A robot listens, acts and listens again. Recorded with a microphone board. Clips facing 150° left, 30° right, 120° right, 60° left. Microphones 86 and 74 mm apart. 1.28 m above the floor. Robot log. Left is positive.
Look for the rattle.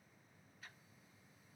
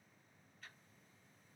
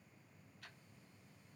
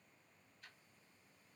cmd idle
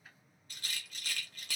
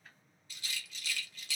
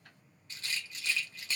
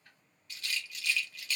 note: The rattle: 175° right.
cmd yaw -175
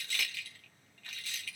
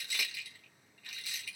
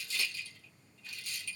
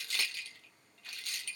note: The rattle is now 45° left.
cmd yaw +45
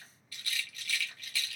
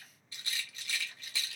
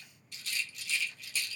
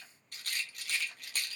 note: The rattle is now 30° left.
cmd yaw +30
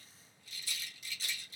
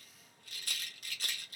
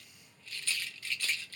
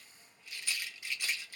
note: The rattle is now 15° right.
cmd yaw -15
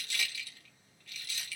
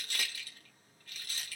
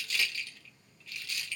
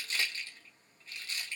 end: Facing the rattle.